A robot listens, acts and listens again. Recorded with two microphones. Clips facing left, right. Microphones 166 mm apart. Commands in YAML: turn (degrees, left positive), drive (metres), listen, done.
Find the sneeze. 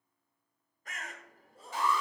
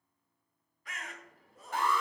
turn: 30
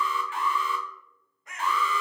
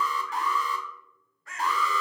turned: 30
listen: true
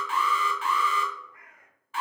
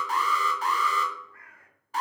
done: "I heard a sneeze, but can't make it out now. It was about straight ahead or 120° left."